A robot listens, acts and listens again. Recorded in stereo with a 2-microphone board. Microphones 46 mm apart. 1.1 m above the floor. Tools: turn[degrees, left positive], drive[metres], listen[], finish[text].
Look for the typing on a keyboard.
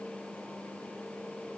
Action: listen[]
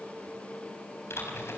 Action: turn[90]
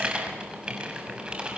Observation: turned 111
Thought: So it is at 20° right.
Action: turn[-20]
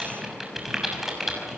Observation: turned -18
Action: finish[Facing the typing on a keyboard.]